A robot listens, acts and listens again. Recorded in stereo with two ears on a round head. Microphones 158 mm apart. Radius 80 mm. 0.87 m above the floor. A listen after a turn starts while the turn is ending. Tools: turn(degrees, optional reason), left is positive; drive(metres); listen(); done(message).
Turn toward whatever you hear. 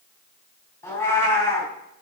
turn(degrees=30)
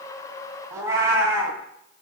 turn(degrees=-15, reason="So it is at 15° right.")
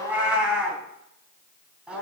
done("Found it: a cat meowing, straight ahead, 2 to 4 m away.")